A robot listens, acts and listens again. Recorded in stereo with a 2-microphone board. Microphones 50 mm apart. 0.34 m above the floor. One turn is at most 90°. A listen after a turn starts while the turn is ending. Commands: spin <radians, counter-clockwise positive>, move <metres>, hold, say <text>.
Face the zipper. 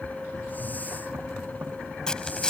spin 0.26
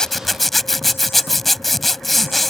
say Facing the zipper.